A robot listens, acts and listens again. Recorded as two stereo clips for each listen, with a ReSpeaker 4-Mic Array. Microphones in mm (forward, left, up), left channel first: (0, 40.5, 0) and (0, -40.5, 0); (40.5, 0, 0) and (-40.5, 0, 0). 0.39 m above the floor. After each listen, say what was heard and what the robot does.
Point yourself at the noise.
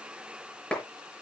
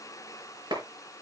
The clap: 170° left. Turn 170° left.
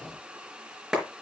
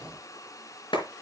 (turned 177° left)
Found it: a clap, straight ahead, over 4 m away.